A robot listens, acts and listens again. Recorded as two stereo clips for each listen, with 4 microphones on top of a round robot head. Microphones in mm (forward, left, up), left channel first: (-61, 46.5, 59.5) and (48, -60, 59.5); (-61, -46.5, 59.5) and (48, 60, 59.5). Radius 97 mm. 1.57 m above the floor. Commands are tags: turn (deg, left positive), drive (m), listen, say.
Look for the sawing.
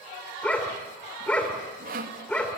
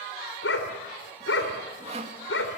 <turn deg="-10"/>
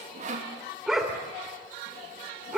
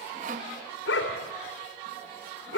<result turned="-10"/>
<say>Facing the sawing.</say>